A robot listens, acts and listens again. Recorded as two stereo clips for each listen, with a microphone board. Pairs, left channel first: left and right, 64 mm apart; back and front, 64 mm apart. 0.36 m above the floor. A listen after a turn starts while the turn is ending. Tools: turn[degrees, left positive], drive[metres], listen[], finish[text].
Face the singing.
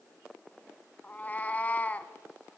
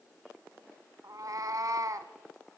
Action: listen[]
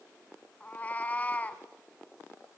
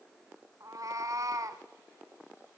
Action: listen[]
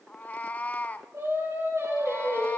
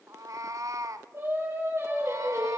Thought: The singing: 50° right.
Action: turn[-50]
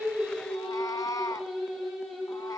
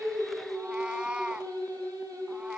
Action: finish[Found it: singing, straight ahead.]